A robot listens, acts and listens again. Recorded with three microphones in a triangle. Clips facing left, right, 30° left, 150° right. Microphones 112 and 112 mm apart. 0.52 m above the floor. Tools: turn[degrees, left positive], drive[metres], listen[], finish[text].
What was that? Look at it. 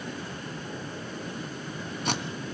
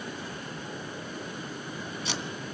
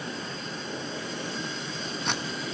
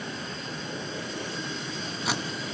Thought: The tape being pulled: 125° left.
Action: turn[125]
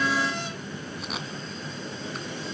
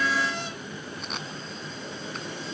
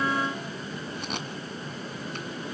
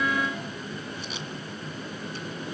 Action: listen[]
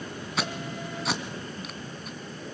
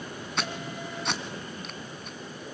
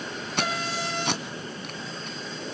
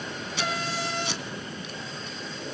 Action: finish[Found it: tape being pulled, straight ahead, 1 to 2 m away.]